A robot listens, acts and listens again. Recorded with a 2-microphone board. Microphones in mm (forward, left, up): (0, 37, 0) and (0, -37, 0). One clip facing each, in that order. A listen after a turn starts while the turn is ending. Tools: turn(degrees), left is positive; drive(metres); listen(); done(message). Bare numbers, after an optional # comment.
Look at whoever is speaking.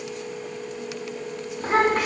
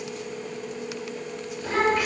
turn(90)
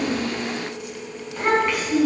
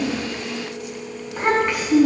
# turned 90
# So it is at 10° right.
turn(-10)
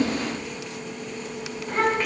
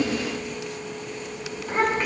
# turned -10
done("Facing the child speaking, over 4 m away.")